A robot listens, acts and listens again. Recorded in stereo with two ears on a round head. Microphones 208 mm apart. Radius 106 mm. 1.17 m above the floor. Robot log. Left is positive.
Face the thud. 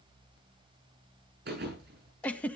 note: The thud: about 50° right or 130° right.
cmd yaw -50
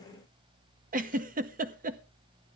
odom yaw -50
cmd idle
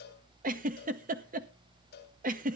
end: I heard a thud, but can't make it out now. It was about straight ahead or 80° right.